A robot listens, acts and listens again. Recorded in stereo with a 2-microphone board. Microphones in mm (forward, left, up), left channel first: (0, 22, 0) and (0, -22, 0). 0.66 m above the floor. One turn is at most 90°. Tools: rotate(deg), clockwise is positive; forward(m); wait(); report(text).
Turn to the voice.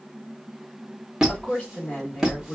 rotate(-25)
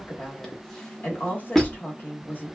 rotate(-90)
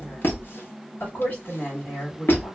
rotate(-60)
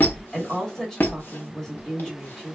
rotate(-15)
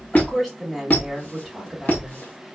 report("Found it: a woman speaking, straight ahead, 1 to 2 m away.")